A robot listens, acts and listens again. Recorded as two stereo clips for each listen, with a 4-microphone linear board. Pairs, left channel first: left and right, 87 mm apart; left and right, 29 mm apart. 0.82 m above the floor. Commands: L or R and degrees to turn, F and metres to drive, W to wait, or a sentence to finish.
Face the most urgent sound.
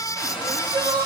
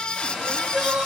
R45
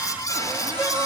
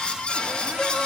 W
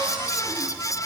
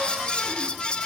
W
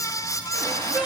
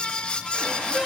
R10
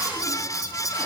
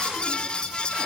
W
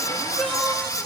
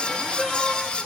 W
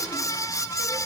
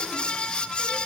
I heard crying from this way, but can't make it out now.